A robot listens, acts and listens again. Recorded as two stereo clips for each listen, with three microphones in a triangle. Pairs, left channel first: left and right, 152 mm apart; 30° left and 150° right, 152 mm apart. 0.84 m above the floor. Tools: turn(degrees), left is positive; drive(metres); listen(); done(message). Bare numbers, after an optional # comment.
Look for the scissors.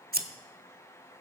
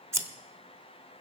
# The scissors: 75° right.
turn(-75)
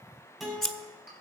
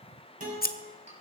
done("Found it: scissors, straight ahead, under 1 m away.")